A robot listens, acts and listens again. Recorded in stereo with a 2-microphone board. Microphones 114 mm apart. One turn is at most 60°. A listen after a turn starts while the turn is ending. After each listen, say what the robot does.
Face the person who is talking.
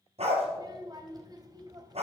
Turn 35° right.
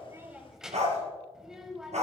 Found it: a child speaking, straight ahead, 1 to 2 m away.